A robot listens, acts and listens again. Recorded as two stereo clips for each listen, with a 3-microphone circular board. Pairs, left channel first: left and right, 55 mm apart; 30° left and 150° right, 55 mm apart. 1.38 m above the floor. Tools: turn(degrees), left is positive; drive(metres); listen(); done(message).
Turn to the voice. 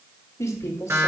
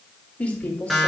turn(degrees=90)
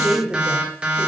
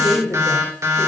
done("Found it: a woman speaking, straight ahead, 2 to 4 m away.")